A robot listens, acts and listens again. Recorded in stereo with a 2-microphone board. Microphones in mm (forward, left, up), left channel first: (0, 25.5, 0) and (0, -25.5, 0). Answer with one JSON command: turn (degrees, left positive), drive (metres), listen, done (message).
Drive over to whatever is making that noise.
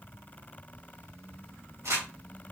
{"turn": -90}
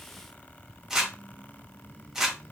{"turn": -10}
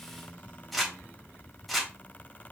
{"drive": 1.0}
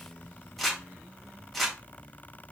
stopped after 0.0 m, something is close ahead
{"done": "Blocked. The crumpling is further on, straight ahead."}